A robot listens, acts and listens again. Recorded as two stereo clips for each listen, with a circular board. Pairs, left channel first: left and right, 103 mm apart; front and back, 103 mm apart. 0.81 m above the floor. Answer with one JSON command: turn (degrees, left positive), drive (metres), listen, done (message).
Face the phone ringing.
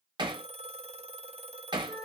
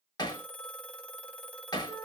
{"turn": -80}
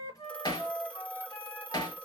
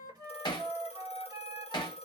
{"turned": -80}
{"turn": 15}
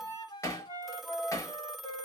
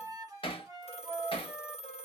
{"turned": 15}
{"done": "Facing the phone ringing, under 1 m away."}